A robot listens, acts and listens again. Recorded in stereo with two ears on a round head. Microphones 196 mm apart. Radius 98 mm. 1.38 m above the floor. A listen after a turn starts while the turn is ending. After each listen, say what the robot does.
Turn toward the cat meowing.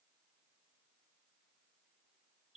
Keep listening.
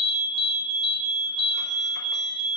Keep listening.
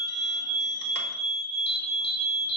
I can't make out a cat meowing, only an alarm and a fire alarm.